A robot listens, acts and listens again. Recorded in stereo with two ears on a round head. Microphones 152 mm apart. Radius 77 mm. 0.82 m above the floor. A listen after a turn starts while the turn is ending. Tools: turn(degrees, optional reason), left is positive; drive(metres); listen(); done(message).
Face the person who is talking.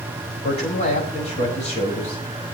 turn(degrees=40, reason="The man speaking: about 40° left or 140° left.")
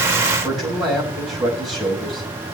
done("Facing the man speaking.")